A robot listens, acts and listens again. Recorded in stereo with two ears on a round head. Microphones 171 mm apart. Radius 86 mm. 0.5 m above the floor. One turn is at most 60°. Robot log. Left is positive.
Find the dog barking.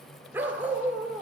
cmd yaw -30
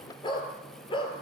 note: So it is at 25° left.
cmd yaw +25
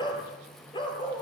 note: The dog barking is now 25° left.
cmd yaw +25
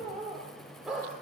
end: Found it: a dog barking, straight ahead, 2 to 4 m away.